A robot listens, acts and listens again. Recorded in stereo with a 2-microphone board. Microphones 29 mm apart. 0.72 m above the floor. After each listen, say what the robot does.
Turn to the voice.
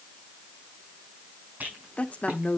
Turn 50° left.
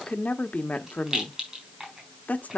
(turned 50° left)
Turn 70° left.
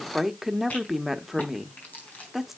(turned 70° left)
Turn 10° right.
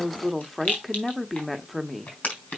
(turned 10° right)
Found it: a woman speaking, straight ahead.